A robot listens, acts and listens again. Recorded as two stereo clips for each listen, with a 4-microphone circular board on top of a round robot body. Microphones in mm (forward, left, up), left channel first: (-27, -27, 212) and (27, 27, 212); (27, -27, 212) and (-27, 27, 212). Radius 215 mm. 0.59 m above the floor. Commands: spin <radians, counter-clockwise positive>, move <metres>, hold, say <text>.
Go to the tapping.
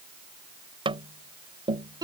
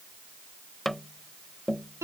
spin 0.70
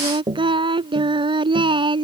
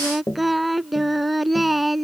move 1.0
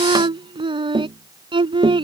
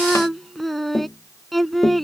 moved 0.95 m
move 1.0
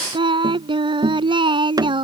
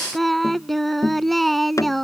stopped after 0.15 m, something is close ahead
say I am next to the tapping.